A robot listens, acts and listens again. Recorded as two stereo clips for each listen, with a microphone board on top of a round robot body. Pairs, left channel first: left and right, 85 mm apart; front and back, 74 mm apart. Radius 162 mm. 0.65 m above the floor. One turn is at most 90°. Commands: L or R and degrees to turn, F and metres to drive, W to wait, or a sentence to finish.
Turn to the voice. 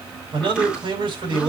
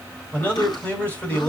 R70
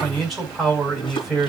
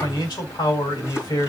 Facing the man speaking.